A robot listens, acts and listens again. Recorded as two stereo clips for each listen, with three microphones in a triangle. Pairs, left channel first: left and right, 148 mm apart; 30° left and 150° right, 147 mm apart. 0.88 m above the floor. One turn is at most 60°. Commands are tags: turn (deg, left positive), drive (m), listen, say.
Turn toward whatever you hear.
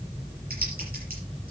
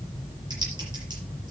<listen/>
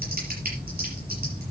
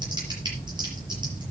<turn deg="-60"/>
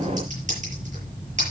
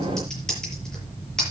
<turn deg="-55"/>
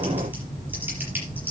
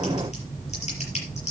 <turn deg="-15"/>
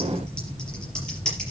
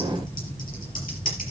<say>Found it: typing on a keyboard, straight ahead.</say>